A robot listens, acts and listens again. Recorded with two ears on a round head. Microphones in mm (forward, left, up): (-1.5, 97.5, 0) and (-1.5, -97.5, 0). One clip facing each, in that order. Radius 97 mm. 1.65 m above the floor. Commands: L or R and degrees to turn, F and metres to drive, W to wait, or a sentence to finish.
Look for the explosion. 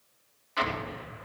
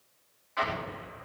L50
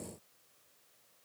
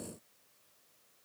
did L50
W
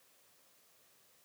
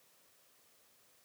I heard an explosion, but can't make it out now. It was about straight ahead or 80° left.